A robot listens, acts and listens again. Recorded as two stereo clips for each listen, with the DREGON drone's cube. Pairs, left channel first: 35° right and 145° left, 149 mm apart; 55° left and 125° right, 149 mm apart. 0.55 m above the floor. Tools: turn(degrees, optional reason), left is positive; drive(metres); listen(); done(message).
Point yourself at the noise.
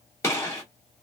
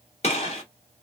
turn(degrees=30, reason="The gunshot: 30° left.")
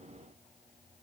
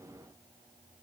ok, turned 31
done("Facing where the gunshot came from. I can't hear it now.")